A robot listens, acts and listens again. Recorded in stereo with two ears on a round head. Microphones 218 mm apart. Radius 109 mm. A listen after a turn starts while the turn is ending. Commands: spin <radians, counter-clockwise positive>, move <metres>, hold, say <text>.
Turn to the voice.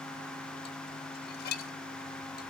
hold
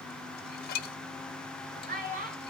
spin -0.70
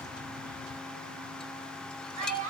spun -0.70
spin -1.66
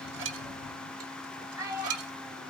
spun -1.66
spin -0.26
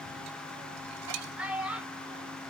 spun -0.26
say Found it: a child speaking, straight ahead, over 4 m away.